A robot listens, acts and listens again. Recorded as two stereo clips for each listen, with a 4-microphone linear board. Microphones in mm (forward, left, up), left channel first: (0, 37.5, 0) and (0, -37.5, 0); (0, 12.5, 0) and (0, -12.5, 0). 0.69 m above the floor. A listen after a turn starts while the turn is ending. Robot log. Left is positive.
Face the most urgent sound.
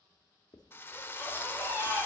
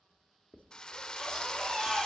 note: The baby crying: about 25° right or 155° right.
cmd yaw -25
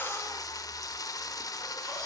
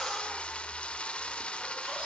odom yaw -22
cmd idle
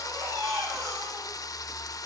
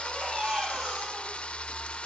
note: So it is at 130° right.
cmd yaw -130
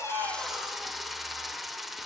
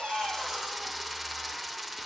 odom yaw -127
cmd idle
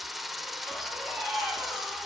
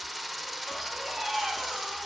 end: Found it: a baby crying, straight ahead.